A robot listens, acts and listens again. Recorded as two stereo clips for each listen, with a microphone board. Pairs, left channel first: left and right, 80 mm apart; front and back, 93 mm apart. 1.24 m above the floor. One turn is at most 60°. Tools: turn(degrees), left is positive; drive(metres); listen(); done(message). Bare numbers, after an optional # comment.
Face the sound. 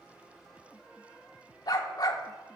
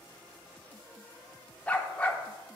# The dog barking: 75° left.
turn(60)
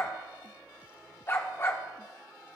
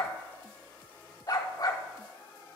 # The dog barking is now 35° left.
turn(35)
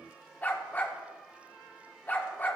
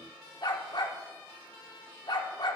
# The dog barking is now 25° left.
turn(25)
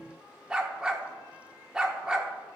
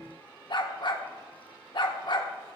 # The dog barking is now 10° right.
turn(-10)
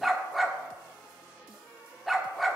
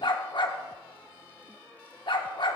done("Found it: a dog barking, straight ahead, 1 to 2 m away.")